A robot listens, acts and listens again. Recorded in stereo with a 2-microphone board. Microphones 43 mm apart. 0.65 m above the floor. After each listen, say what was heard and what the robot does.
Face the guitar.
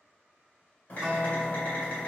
The guitar: about 35° right or 145° right. Turn 35° right.
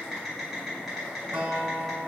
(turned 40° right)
So it is at 105° right. Turn 105° right.
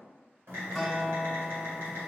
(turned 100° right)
Found it: a guitar, straight ahead.